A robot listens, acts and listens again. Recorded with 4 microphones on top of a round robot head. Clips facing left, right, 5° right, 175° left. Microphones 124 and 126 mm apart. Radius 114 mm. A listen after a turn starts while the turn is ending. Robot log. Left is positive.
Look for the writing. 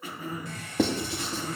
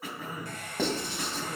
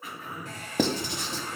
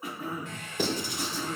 note: The writing: 10° left.
cmd yaw +10
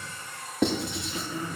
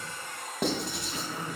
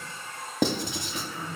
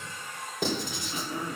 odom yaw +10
end: Found it: writing, straight ahead.